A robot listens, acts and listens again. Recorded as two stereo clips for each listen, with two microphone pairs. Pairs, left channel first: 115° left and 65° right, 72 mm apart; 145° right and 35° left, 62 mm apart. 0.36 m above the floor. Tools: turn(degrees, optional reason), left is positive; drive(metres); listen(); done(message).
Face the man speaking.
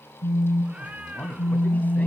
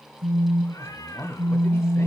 turn(degrees=180, reason="The man speaking: straight behind.")
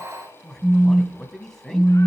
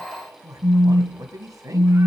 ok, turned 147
turn(degrees=30, reason="The man speaking is now 30° left.")
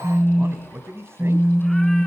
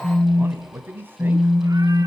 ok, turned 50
turn(degrees=-15, reason="The man speaking is now 15° right.")
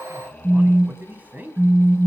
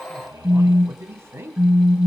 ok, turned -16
done("Facing the man speaking, 2 to 4 m away.")